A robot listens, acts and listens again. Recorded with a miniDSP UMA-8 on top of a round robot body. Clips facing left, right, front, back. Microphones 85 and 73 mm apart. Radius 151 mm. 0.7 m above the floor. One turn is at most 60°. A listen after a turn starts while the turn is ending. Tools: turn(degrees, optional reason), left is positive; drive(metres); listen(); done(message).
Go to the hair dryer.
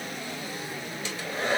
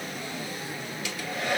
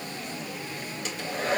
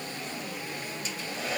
turn(degrees=30, reason="The hair dryer: 30° left.")
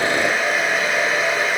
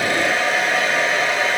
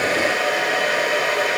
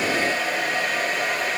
drive(metres=1.0)
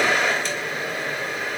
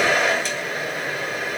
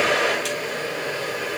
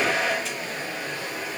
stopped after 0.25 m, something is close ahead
done("Blocked. The hair dryer is further on, straight ahead.")